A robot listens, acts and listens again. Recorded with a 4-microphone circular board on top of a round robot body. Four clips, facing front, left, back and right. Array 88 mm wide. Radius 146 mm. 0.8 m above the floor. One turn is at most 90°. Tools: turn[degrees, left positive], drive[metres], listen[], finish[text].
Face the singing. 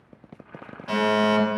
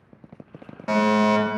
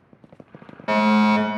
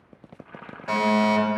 Action: listen[]
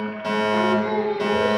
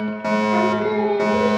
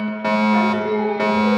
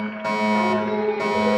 Thought: The singing: 95° left.
Action: turn[90]
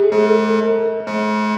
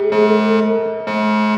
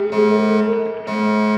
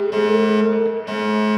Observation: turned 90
Action: finish[Found it: singing, straight ahead.]